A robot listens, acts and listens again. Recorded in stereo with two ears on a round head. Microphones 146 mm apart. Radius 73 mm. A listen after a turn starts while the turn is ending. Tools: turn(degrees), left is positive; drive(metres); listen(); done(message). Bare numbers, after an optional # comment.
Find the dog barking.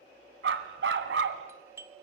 turn(-90)
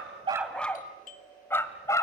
# So it is at 20° left.
turn(20)
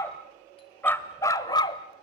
# The dog barking is now 30° left.
turn(30)
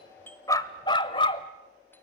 # The dog barking is now 35° left.
turn(35)
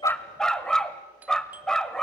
done("Found it: a dog barking, straight ahead.")